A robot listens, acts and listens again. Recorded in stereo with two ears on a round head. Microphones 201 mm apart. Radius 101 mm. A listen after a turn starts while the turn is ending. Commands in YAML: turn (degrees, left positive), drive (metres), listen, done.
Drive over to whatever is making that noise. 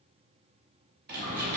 turn: -45
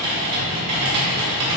turn: -90
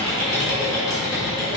turn: 15
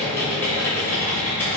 turn: 10
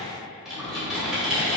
drive: 1.0
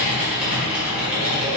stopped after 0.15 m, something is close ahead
done: "Blocked. The typing on a keyboard is further on, straight ahead."